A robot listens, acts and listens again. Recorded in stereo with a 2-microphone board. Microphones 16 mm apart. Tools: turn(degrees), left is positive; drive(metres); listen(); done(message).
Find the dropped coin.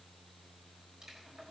listen()
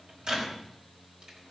listen()
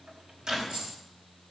turn(degrees=-70)
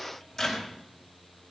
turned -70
listen()
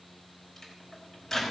done("I heard a dropped coin, but can't make it out now. It was about straight ahead or 40° right.")